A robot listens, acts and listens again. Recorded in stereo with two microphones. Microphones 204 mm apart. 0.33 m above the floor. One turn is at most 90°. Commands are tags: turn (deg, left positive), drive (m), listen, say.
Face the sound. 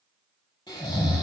<turn deg="20"/>
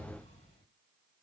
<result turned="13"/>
<listen/>
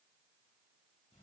<listen/>
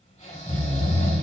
<turn deg="90"/>
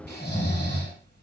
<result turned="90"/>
<turn deg="60"/>
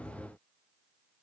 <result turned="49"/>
<turn deg="10"/>
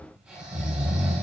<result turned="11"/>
<say>Found it: snoring, straight ahead.</say>